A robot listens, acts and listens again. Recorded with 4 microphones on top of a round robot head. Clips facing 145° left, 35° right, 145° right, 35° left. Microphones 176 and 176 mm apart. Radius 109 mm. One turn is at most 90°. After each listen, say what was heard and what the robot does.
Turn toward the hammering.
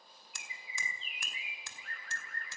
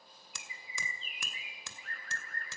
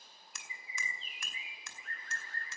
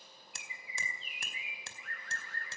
The hammering: 25° right. Turn 25° right.
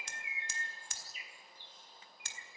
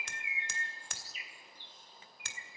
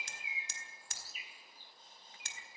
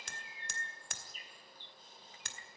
Facing the hammering, 2 to 4 m away.